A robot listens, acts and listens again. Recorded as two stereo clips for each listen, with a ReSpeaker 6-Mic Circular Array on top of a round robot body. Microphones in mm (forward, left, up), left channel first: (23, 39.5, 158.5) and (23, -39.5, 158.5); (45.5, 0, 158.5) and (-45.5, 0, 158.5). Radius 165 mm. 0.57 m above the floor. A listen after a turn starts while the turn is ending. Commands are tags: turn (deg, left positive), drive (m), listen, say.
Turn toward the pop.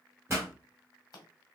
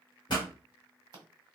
<turn deg="-35"/>
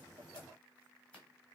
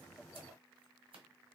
<say>Facing where the pop came from. I can't hear it now.</say>